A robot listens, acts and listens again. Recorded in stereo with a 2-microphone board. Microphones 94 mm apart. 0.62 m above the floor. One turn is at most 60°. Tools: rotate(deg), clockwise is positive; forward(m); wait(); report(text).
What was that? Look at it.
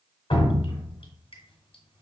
rotate(-60)
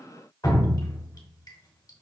rotate(-45)
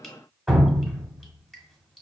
report("Found it: dripping, straight ahead.")